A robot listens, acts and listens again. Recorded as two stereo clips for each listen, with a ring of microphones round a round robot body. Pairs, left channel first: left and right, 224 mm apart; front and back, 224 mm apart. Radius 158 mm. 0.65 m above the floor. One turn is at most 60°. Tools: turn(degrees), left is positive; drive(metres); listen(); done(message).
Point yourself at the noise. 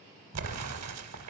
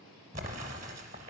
turn(degrees=-60)
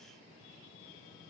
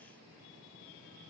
turn(degrees=-55)
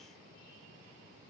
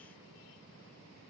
done("I heard an explosion from this way, but can't make it out now.")